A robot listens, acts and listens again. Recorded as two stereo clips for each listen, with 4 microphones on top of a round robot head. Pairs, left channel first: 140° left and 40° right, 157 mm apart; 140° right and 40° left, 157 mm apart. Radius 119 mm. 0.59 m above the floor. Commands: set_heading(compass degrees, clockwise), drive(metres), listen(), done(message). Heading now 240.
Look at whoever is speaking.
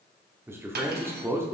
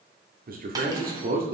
set_heading(205)
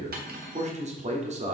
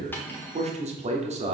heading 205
done("Found it: a man speaking, straight ahead.")